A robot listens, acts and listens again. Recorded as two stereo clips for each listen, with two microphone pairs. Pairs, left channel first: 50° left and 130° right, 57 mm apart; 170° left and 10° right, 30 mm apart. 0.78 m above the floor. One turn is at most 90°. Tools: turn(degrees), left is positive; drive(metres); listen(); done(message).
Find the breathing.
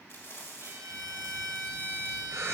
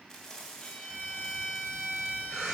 turn(degrees=-90)
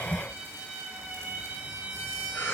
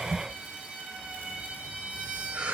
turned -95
done("Facing the breathing.")